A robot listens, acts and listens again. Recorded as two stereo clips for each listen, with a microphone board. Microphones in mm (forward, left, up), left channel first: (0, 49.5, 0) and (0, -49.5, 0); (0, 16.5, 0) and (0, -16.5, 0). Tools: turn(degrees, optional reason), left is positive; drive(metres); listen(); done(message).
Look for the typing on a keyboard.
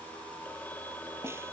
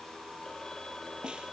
listen()
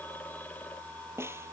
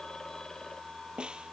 listen()
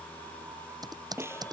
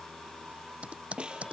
turn(degrees=-40, reason="The typing on a keyboard: about 40° right or 140° right.")
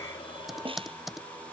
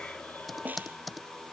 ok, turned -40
done("Found it: typing on a keyboard, straight ahead.")